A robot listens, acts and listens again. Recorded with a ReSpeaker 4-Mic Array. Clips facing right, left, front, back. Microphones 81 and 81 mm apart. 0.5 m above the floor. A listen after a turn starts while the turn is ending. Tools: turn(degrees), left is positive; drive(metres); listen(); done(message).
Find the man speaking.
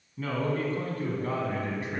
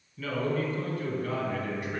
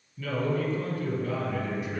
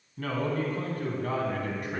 turn(degrees=-150)
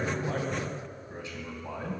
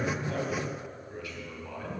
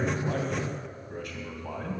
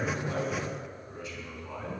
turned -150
turn(degrees=-30)
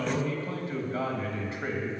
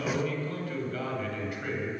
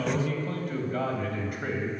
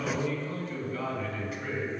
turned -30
turn(degrees=-35)
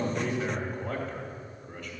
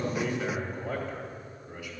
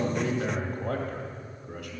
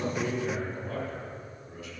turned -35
done("Found it: a man speaking, straight ahead, 2 to 4 m away.")